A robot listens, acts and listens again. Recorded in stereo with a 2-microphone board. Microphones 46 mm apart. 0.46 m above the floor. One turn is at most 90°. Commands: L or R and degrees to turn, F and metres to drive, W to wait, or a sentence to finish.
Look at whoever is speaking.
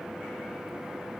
W
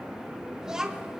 R30
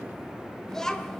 L15
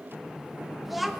Facing the child speaking.